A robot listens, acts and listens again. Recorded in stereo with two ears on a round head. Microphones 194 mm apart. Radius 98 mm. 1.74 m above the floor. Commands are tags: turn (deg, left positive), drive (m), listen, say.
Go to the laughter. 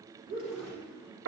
<turn deg="-40"/>
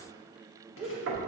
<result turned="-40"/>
<drive m="1.0"/>
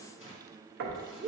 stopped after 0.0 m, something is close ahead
<say>Blocked. The laughter is further on, straight ahead.</say>